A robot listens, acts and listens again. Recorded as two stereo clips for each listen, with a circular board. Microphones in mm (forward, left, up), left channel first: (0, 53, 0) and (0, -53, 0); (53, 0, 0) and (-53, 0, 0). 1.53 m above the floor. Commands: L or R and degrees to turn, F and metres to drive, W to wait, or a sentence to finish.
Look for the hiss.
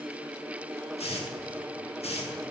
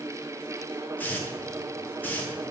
L75
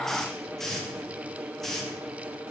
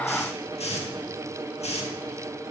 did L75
Found it: a hiss, straight ahead.